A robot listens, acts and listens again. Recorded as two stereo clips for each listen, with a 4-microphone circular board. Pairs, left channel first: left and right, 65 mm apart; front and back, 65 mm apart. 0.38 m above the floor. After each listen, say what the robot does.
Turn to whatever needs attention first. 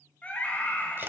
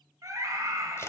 Turn 155° left.
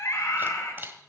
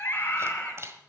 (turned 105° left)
Turn 50° left.
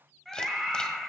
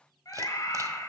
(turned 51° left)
Found it: a scream, straight ahead, 2 to 4 m away.